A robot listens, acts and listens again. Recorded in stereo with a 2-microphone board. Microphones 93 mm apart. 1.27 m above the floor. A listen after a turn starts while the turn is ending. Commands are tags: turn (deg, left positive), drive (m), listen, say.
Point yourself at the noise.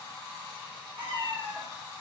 <turn deg="-60"/>
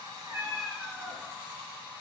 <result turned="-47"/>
<turn deg="-35"/>
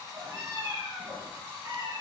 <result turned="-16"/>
<turn deg="-45"/>
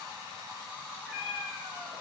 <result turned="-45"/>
<turn deg="-10"/>
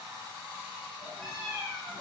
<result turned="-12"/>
<say>Facing the cat meowing, 2 to 4 m away.</say>